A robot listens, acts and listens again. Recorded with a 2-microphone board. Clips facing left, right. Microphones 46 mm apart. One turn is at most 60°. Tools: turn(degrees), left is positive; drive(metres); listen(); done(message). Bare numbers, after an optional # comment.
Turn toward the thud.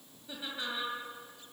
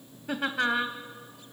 listen()
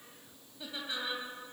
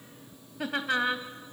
listen()
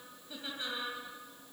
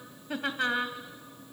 done("I can't make out a thud to turn to.")